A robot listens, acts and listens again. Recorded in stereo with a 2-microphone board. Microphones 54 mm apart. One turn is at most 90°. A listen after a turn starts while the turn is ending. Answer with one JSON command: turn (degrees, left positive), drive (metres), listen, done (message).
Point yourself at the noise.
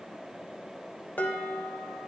{"turn": 30}
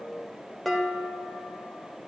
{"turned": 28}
{"done": "Found it: dishes clattering, straight ahead, 1 to 2 m away."}